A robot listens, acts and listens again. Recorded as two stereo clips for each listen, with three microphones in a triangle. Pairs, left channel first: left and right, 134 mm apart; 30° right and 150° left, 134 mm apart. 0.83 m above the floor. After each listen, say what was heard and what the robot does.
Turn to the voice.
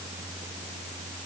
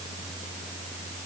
Keep listening.
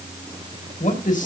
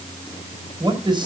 The man speaking: 95° left. Turn 95° left.
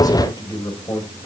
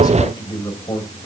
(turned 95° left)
The man speaking is now 30° left. Turn 30° left.
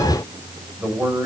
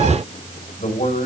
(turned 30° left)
The man speaking is now 10° right. Turn 10° right.
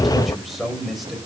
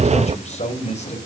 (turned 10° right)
Facing the man speaking.